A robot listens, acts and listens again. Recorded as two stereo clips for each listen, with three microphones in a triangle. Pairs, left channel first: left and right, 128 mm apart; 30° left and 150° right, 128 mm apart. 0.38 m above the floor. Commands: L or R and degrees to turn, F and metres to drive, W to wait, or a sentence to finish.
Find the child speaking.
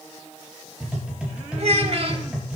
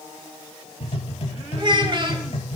R110
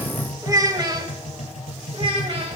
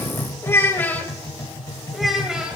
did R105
R45
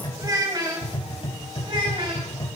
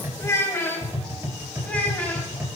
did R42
R40
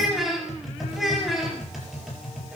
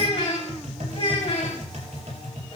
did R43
Found it: a child speaking, straight ahead, 2 to 4 m away.